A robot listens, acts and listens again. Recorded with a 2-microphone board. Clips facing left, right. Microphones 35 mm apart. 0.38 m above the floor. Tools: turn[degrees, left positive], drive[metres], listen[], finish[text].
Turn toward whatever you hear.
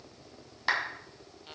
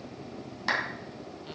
Action: turn[30]
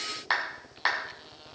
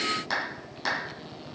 Thought: So it is at 140° left.
Action: turn[140]
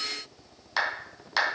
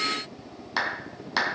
Action: finish[Found it: a clap, straight ahead.]